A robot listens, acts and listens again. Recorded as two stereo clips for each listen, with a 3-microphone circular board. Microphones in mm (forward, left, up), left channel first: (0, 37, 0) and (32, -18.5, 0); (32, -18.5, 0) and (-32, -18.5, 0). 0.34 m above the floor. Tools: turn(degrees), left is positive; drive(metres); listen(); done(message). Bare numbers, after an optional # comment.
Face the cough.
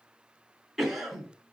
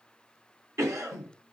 # The cough: 145° right.
turn(-145)
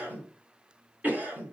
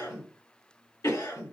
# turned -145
done("Facing the cough.")